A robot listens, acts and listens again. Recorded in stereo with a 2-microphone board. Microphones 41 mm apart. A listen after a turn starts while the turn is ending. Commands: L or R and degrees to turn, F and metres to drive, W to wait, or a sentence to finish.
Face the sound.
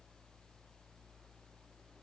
W
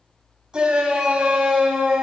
R20
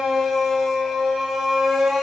Found it: a shout, straight ahead, 2 to 4 m away.